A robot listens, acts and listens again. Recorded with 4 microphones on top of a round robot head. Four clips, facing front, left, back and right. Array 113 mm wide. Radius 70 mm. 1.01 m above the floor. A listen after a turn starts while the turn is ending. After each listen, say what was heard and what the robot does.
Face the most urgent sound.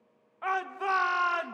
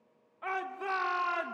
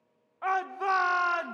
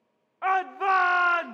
The shout: 105° right. Turn 105° right.
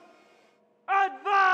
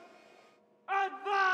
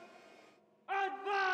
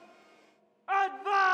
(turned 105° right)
The shout is now 10° right. Turn 10° right.
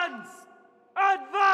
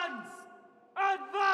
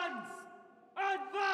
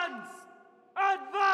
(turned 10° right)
Found it: a shout, straight ahead.